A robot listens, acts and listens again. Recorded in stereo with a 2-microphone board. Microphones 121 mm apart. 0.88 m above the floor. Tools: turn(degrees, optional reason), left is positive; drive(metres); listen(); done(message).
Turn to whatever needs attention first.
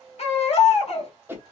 turn(degrees=60, reason="The baby crying: about 60° left or 120° left.")
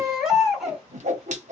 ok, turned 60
done("Facing the baby crying, 1 to 2 m away.")